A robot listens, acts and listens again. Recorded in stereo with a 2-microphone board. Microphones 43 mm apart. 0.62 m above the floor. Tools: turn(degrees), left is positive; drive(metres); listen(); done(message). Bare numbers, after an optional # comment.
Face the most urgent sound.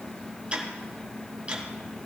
listen()
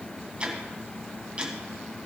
listen()
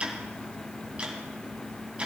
done("I can't make out anything urgent to turn to.")